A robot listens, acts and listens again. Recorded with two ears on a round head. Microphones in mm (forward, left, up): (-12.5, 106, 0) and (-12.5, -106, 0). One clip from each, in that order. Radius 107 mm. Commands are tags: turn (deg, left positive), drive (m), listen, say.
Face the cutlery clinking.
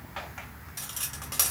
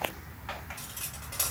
<turn deg="55"/>
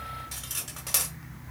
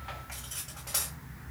<turn deg="70"/>
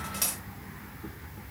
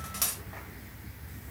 <turn deg="-10"/>
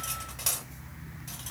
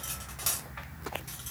<say>Facing the cutlery clinking.</say>